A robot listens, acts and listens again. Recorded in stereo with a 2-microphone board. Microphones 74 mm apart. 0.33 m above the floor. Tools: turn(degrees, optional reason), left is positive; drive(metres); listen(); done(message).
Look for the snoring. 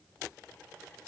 listen()
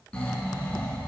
turn(degrees=30)
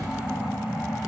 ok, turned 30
turn(degrees=-15, reason="So it is at 15° right.")
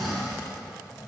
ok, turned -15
done("Facing the snoring.")